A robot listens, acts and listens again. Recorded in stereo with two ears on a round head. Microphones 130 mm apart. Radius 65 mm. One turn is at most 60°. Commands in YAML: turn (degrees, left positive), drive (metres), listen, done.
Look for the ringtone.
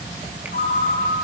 turn: 60
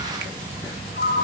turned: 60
turn: 60
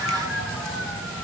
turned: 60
done: "Facing the ringtone."